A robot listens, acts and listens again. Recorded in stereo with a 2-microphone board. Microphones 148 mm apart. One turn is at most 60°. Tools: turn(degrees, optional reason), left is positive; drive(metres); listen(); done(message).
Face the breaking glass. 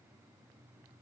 listen()
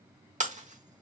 turn(degrees=-55, reason="The breaking glass: about 55° right or 125° right.")
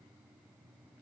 listen()
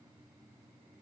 done("I heard breaking glass, but can't make it out now. It was about straight ahead or 70° right.")